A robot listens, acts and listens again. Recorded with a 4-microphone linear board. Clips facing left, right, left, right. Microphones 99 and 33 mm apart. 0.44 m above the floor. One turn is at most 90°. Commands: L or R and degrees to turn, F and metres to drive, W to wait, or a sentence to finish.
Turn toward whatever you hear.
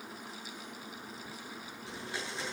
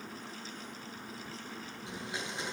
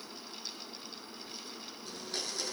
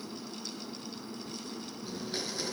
R15
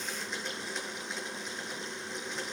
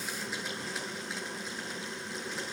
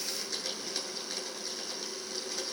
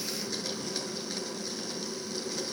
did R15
Facing the blender, over 4 m away.